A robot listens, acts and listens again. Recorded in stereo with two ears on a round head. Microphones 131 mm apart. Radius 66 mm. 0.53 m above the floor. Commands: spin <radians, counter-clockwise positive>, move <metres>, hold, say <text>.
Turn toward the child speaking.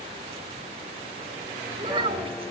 spin -0.70
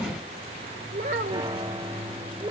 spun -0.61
spin -0.52
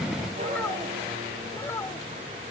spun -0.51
spin 0.26
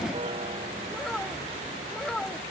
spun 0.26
say Found it: a child speaking, straight ahead.